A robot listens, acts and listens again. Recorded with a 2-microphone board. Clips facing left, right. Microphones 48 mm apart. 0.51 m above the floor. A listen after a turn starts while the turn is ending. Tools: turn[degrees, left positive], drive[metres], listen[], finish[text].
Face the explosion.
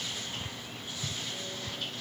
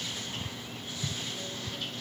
Action: listen[]
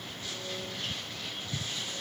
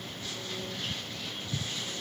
Action: listen[]
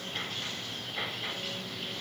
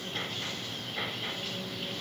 Action: finish[I can't make out an explosion to turn to.]